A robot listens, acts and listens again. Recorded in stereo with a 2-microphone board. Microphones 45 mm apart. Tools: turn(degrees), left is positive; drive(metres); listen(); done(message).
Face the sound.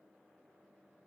listen()
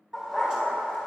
turn(degrees=-15)
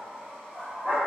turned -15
turn(degrees=-135)
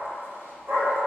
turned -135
turn(degrees=-45)
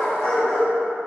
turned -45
turn(degrees=10)
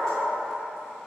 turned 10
done("Facing the dog barking, over 4 m away.")